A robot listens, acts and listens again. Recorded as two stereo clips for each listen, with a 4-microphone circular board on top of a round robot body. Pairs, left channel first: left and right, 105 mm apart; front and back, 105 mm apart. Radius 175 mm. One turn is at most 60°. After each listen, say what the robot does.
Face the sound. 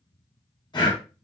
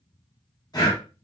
Turn 45° left.
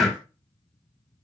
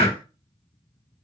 Facing the breathing.